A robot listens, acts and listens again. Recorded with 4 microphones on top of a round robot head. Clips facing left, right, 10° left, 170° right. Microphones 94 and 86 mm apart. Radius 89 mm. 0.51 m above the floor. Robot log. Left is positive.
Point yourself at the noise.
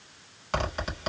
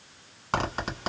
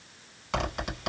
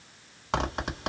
note: The zipper: 135° right.
cmd yaw -135
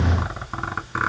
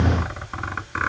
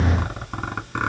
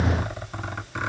note: The zipper is now 15° left.
cmd yaw +15
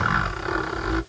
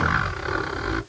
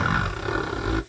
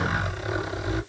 end: Facing the zipper.